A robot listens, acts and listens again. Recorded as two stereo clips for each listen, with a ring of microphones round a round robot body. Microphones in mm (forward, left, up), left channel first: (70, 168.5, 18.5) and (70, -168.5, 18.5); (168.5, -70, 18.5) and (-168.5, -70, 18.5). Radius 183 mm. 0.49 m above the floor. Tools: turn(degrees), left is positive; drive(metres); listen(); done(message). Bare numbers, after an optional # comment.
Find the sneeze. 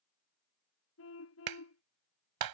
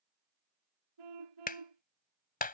listen()
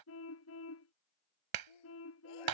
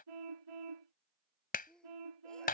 # The sneeze: 90° left.
turn(90)
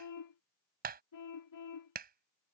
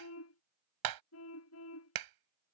done("Facing where the sneeze came from. I can't hear it now.")